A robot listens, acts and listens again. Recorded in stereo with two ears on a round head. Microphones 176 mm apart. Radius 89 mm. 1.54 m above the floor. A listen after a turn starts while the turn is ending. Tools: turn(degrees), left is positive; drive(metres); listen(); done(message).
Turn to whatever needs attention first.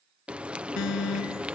turn(degrees=90)
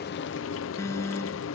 turn(degrees=15)
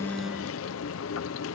listen()
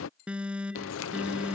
done("Facing the alarm.")